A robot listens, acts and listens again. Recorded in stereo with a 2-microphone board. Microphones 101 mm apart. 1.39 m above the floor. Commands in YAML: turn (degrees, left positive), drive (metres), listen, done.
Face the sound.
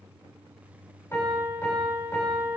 turn: 30
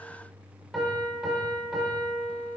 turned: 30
done: "Facing the piano."